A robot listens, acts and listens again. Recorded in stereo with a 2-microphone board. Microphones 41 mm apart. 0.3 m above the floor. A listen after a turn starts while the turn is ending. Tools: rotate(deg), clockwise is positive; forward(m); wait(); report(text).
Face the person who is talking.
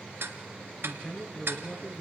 rotate(-30)
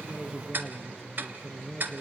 report("Found it: a man speaking, straight ahead, over 4 m away.")